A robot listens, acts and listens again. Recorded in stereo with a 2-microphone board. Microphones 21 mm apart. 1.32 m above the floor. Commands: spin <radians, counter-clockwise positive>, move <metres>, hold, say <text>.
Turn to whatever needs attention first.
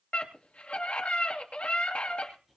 spin 1.57
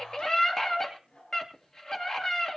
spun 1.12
spin 0.61
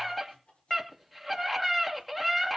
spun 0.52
say Found it: a scream, straight ahead, 2 to 4 m away.